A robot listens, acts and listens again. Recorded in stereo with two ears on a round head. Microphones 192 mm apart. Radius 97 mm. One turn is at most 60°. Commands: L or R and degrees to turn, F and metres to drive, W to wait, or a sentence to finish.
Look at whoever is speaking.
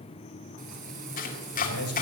L60
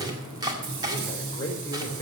L15
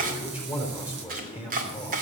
Found it: a man speaking, straight ahead, over 4 m away.